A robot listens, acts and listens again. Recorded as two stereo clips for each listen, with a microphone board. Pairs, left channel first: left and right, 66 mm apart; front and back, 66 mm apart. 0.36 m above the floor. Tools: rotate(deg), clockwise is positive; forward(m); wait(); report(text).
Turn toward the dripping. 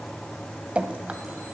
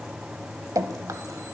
rotate(160)
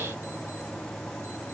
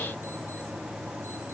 wait()
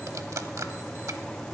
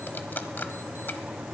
wait()
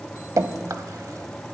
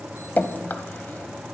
rotate(60)
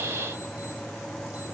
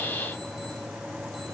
wait()
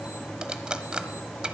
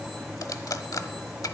rotate(15)
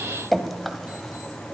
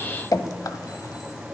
report("Found it: dripping, straight ahead, under 1 m away.")